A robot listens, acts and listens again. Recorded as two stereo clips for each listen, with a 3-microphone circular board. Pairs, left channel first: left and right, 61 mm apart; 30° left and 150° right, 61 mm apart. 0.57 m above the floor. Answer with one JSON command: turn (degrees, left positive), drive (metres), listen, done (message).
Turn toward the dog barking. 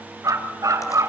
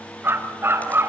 {"turn": -105}
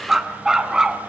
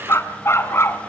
{"turn": -15}
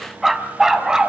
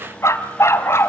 {"turn": -10}
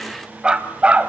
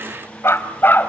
{"turn": -25}
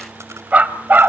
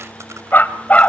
{"turn": -35}
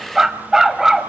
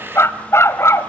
{"done": "Found it: a dog barking, straight ahead."}